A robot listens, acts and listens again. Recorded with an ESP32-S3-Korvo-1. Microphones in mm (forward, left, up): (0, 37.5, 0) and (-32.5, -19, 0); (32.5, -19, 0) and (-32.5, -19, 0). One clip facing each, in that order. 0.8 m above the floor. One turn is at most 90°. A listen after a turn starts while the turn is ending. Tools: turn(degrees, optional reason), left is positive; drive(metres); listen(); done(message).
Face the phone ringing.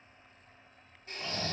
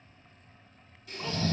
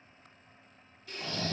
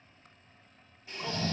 listen()
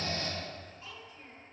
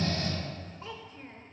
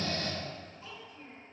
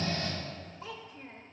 listen()
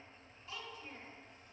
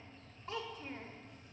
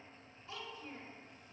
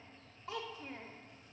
done("I can't make out a phone ringing to turn to.")